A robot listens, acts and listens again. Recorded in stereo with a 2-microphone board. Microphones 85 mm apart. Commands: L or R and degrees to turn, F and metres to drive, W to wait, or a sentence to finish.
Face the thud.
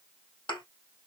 L75
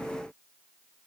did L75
W
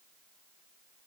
I heard a thud, but can't make it out now. It was about straight ahead or 30° left.